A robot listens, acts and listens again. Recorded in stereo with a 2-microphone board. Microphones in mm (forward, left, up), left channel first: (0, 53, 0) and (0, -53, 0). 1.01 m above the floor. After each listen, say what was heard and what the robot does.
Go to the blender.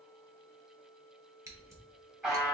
Keep listening.
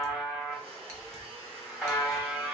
The blender: about 70° right or 110° right. Turn 70° right.
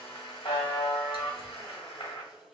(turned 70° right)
So it is at 35° right. Turn 35° right.
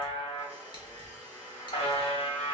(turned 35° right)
The blender is now 15° right. Turn 15° right.
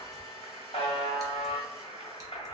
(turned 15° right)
Drive 1.0 m forward.
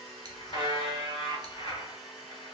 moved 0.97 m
Drive 1.0 m forward.
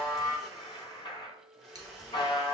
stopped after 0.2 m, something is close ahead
Arrived at the blender, straight ahead.